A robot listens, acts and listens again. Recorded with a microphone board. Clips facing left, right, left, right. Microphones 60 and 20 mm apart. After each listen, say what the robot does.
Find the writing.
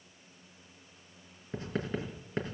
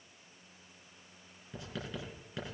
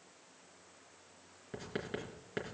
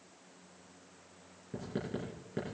Turn 40° left.
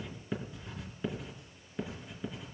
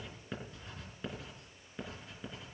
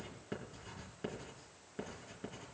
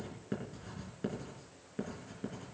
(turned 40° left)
Facing the writing, 2 to 4 m away.